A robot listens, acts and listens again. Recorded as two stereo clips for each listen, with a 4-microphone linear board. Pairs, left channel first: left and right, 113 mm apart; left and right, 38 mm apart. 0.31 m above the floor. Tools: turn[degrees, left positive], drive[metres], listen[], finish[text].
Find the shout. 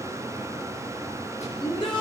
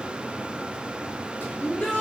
Thought: The shout: about 45° left or 135° left.
Action: turn[45]
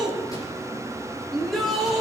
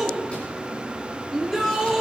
Action: finish[Facing the shout.]